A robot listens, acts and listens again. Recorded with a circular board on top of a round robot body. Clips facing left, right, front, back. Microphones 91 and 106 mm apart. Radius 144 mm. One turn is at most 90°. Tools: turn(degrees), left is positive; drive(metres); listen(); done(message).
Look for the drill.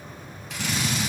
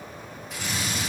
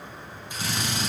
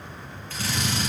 turn(degrees=75)
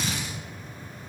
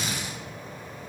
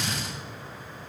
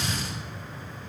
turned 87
turn(degrees=-15)
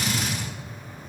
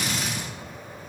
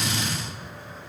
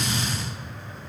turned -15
done("Facing the drill.")